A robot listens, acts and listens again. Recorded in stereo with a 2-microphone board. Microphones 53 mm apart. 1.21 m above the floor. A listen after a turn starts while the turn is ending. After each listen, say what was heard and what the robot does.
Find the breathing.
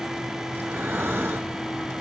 The breathing: about 50° right or 130° right. Turn 50° right.
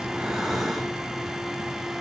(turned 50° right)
Facing the breathing, over 4 m away.